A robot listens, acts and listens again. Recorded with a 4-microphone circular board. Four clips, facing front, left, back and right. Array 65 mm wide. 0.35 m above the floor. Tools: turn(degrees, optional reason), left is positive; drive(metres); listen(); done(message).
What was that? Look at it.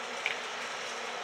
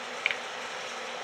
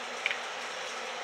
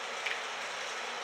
turn(degrees=100, reason="The finger snap: 100° left.")
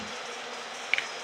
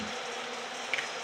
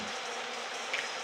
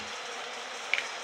turn(degrees=-20, reason="The finger snap is now 20° right.")
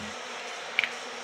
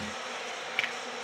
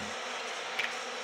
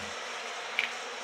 done("Found it: a finger snap, straight ahead.")